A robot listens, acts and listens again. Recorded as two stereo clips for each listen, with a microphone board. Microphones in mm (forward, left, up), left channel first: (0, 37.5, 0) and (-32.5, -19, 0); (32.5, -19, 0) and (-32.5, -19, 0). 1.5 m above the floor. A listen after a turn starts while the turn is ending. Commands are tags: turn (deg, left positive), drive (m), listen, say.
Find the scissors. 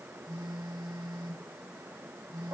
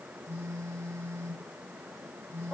<listen/>
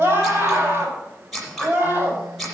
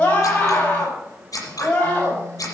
<turn deg="-30"/>
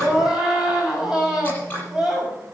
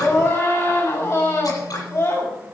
<say>Facing the scissors, over 4 m away.</say>